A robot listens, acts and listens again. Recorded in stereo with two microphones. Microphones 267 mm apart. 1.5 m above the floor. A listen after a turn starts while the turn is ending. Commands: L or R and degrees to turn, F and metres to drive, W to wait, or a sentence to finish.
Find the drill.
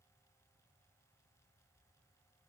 W
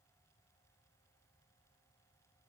W
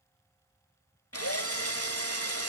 L60
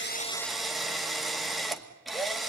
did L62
Found it: a drill, straight ahead.